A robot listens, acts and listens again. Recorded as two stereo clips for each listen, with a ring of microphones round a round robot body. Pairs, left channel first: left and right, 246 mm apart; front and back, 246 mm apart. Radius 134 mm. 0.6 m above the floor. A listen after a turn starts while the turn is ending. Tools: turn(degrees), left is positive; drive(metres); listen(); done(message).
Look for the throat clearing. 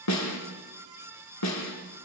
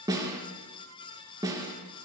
listen()
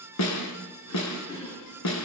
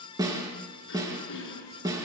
turn(degrees=15)
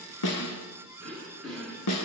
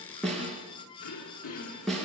done("Found it: throat clearing, straight ahead, over 4 m away.")